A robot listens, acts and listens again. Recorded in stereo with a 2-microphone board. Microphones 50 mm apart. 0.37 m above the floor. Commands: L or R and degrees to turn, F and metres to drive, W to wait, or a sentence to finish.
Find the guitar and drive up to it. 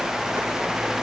W
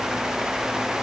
W
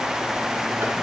I can't make out a guitar to turn to.